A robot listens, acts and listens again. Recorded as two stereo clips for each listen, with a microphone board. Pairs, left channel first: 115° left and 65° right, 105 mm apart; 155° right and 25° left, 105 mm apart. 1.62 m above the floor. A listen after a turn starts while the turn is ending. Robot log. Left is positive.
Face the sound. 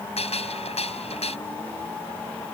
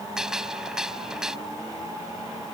note: The gunshot: 105° left.
cmd yaw +105
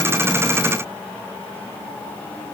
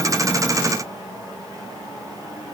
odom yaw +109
end: I heard a gunshot from this way, but can't make it out now.